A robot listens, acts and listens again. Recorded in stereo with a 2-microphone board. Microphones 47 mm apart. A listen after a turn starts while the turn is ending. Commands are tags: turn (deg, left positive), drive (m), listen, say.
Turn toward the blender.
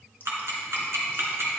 <listen/>
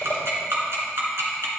<listen/>
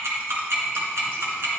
<say>I can't make out a blender, only ticking.</say>